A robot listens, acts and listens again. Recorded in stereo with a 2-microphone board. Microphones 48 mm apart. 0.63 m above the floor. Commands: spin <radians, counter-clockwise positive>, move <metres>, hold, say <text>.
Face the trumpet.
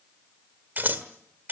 hold
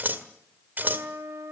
spin -1.31
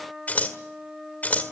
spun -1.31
say Facing the trumpet, 2 to 4 m away.